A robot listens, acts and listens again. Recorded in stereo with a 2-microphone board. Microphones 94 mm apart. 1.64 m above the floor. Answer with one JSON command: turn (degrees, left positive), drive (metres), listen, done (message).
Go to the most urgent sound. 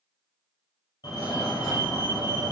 {"turn": 45}
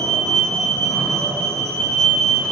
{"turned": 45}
{"drive": 1.0}
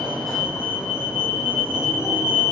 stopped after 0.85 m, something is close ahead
{"done": "Arrived at the fire alarm, straight ahead."}